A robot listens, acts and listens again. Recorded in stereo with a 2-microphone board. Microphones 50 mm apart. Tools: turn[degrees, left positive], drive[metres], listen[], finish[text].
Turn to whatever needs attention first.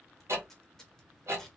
Action: listen[]
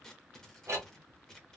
Action: listen[]
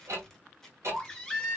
Action: turn[30]
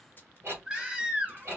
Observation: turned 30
Thought: So it is at 20° right.
Action: turn[-20]
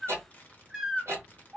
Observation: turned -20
Thought: The baby crying is now 10° right.
Action: turn[-10]
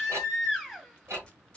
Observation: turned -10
Action: finish[Found it: a baby crying, straight ahead.]